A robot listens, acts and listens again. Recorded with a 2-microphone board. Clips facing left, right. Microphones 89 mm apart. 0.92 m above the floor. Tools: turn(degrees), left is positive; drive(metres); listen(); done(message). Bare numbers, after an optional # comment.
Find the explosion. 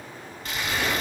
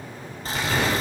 turn(-90)
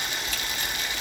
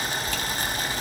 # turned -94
done("Facing where the explosion came from. I can't hear it now.")